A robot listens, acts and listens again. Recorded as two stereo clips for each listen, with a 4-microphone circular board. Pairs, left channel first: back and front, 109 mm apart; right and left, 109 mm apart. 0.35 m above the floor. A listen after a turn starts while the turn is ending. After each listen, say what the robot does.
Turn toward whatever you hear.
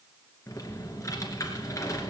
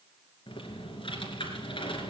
Turn 120° right.
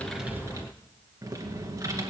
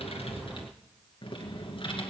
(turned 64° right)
Turn 55° right.
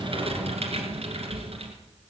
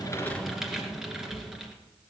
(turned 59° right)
Facing the typing on a keyboard.